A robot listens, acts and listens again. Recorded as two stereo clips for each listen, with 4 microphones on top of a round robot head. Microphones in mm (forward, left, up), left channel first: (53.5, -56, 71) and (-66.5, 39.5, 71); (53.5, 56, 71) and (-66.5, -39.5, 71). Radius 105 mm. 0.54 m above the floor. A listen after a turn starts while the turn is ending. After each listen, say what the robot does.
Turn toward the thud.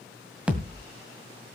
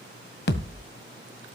Turn 60° left.
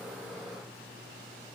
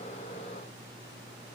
Facing where the thud came from. I can't hear it now.